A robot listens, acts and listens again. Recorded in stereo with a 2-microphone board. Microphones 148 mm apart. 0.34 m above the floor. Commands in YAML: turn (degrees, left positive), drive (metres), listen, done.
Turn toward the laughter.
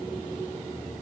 listen: true
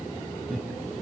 turn: 30
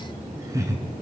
turn: -20
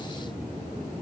listen: true
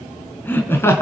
turn: 20
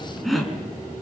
done: "Facing the laughter, 2 to 4 m away."